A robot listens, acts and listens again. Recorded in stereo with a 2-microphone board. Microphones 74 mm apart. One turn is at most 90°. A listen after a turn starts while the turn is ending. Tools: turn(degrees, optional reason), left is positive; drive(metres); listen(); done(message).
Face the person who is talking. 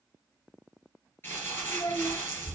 turn(degrees=65, reason="The child speaking: about 65° left or 115° left.")
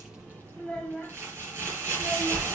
done("Facing the child speaking.")